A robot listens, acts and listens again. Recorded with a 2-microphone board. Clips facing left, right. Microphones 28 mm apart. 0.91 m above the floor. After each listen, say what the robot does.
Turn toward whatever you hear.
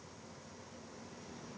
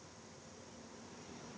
Keep listening.
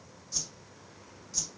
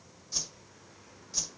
Turn 15° right.
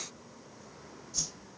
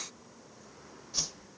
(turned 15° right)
Turn 145° right.
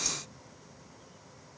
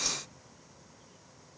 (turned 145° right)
Turn 40° right.
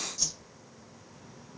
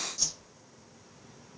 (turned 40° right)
Turn 10° right.
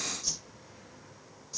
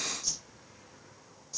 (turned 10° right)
Facing the whoosh, 1 to 2 m away.